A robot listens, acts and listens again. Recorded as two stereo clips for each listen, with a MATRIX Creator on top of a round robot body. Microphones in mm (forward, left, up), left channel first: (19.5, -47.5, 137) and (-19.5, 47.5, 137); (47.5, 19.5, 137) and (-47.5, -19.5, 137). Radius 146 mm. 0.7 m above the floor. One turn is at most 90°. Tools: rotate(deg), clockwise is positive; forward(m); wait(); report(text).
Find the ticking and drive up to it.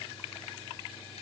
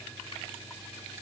wait()
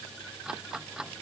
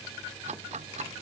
rotate(90)
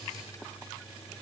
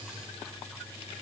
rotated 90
rotate(75)
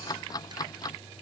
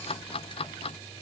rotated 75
rotate(10)
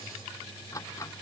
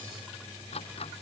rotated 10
forward(1.0)
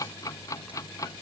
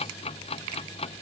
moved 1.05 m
forward(1.0)
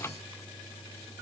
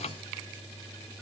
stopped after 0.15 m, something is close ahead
report("Blocked. The ticking is further on, straight ahead.")